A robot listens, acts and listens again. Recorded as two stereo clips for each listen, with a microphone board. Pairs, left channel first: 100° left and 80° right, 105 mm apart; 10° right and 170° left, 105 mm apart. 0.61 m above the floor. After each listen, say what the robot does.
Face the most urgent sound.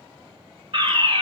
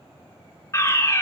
Turn 70° right.
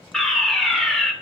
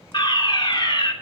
Turn 15° left.
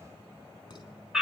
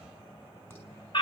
Found it: a fire alarm, straight ahead.